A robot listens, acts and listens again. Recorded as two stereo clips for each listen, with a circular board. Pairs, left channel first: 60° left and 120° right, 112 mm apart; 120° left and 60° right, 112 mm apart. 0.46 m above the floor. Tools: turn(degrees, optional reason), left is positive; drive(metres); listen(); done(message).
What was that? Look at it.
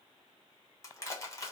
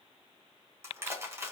done("Facing the crushing.")